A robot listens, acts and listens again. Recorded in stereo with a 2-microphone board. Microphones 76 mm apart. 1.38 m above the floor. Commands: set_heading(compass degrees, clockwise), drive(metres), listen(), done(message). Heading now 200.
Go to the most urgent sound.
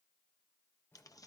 listen()
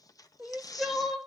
set_heading(170)
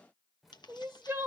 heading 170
set_heading(205)
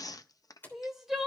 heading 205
drive(1.0)
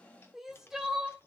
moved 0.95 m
drive(1.0)
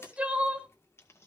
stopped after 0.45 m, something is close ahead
set_heading(225)
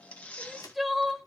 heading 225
done("I am next to the crying.")